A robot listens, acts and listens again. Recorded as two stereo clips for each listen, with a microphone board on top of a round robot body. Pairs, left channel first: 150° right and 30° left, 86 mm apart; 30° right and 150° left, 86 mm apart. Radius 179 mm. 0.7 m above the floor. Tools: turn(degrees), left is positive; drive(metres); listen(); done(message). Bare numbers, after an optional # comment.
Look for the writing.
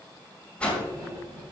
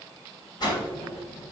# The writing: 25° right.
turn(-25)
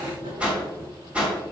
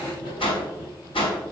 done("Facing the writing, 2 to 4 m away.")